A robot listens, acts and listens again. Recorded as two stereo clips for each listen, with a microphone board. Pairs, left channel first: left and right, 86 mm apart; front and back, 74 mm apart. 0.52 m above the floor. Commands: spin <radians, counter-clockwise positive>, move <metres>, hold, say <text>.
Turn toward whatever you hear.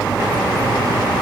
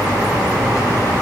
hold
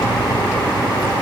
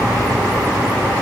hold
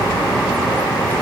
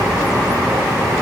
say I can't make out anything.